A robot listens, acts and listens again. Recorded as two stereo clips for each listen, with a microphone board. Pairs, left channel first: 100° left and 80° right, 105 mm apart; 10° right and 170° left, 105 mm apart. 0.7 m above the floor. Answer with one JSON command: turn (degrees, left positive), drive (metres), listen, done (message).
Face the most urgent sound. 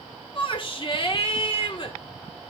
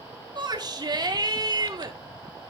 {"turn": 125}
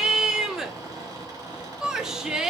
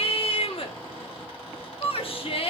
{"done": "Found it: a shout, straight ahead, 1 to 2 m away."}